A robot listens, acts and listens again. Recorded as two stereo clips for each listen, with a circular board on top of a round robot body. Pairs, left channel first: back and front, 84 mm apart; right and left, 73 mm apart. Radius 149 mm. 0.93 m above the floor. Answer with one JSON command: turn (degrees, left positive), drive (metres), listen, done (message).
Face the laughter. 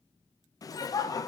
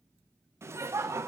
{"turn": 140}
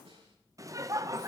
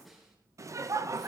{"turn": 50}
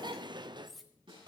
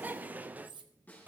{"turn": 25}
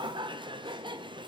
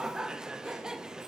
{"turn": 10}
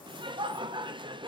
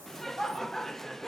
{"done": "Found it: laughter, straight ahead."}